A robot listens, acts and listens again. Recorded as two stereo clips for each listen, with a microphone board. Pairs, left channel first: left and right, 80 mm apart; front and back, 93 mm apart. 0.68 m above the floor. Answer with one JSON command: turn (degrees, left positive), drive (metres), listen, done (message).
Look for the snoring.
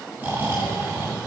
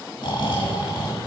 {"turn": -30}
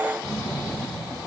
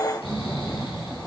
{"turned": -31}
{"done": "Facing the snoring, 2 to 4 m away."}